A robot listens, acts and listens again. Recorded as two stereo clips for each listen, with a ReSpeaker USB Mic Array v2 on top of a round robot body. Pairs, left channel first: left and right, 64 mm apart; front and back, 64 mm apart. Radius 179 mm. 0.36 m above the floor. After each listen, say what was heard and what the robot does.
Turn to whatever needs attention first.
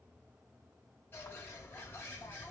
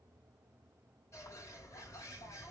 Keep listening.
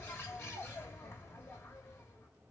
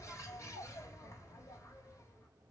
Keep listening.
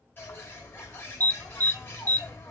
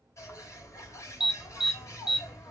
The alarm: 100° right. Turn 100° right.
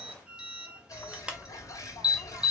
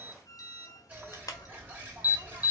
The alarm is now 15° right. Turn 15° right.
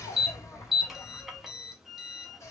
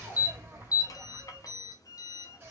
Found it: an alarm, straight ahead, 1 to 2 m away.